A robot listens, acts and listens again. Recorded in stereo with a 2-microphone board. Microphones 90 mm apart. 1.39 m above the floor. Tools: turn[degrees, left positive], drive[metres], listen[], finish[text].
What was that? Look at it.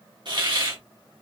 Thought: The hiss: about 50° right or 130° right.
Action: turn[-50]
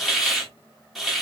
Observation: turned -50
Action: finish[Facing the hiss, 1 to 2 m away.]